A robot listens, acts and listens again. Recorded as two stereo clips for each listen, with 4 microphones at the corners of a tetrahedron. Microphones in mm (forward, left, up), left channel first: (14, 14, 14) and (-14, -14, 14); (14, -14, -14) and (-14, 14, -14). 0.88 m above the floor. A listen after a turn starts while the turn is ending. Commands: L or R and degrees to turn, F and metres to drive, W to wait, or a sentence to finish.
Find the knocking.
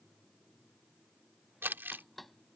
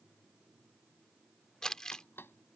R40
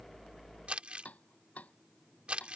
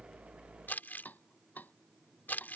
Found it: knocking, straight ahead.